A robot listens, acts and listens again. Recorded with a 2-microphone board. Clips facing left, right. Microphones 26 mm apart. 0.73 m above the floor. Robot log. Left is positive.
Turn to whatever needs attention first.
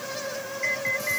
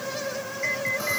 cmd yaw +30
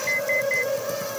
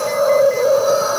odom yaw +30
cmd idle
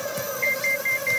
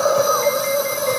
cmd idle
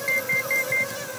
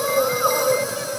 end: I heard an alarm, but can't make it out now. It was about 25° right or 145° left.